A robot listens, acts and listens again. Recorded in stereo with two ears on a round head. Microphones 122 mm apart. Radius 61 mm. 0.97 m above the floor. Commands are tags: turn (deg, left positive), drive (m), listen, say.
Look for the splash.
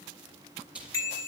<turn deg="-30"/>
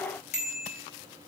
<listen/>
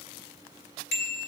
<say>I heard a splash, but can't make it out now. It was about 20° left or 140° right.</say>